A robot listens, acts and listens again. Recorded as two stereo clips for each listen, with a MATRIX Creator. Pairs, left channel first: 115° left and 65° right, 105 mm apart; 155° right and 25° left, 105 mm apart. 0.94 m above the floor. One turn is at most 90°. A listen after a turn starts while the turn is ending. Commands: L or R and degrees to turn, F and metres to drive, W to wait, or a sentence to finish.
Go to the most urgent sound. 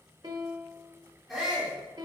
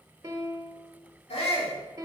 R90
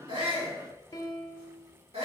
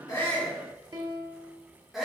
R65
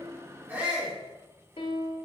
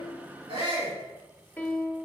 F1.0
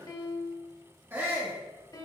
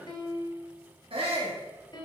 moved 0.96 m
F1.0
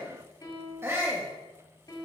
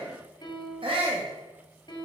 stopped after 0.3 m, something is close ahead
Arrived at the shout, straight ahead.